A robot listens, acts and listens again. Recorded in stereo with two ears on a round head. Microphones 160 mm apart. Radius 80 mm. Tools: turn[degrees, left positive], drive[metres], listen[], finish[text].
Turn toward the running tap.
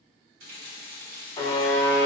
Thought: The running tap: about 55° right or 125° right.
Action: turn[-55]
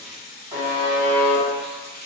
Thought: So it is at 70° right.
Action: turn[-70]
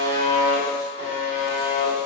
Action: listen[]
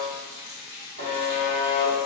Thought: The running tap is now 20° right.
Action: turn[-20]
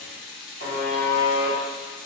Action: finish[Facing the running tap, under 1 m away.]